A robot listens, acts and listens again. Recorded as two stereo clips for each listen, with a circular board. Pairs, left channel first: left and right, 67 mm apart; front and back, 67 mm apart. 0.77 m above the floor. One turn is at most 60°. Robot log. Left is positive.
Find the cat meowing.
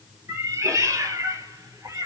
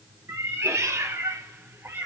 note: The cat meowing: 120° right.
cmd yaw -60
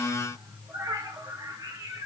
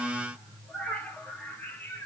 note: The cat meowing is now 65° right.
cmd yaw -60
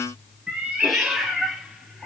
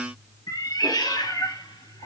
end: Facing the cat meowing.